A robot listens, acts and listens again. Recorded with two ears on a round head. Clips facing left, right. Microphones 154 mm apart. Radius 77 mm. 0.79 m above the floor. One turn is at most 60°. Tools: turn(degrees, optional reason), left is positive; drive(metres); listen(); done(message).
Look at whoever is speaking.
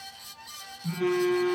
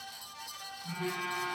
listen()
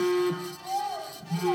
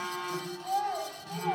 turn(degrees=-30)
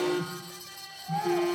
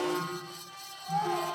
listen()
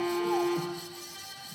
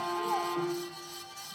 listen()
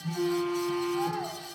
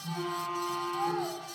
done("I heard a child speaking, but can't make it out now. It was about 25° left or 145° right.")